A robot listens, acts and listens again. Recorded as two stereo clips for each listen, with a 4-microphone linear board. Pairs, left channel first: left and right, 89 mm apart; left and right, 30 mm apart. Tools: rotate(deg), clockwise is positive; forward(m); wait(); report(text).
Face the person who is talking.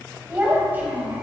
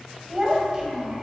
rotate(20)
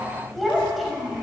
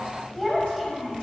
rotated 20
report("Facing the child speaking, 2 to 4 m away.")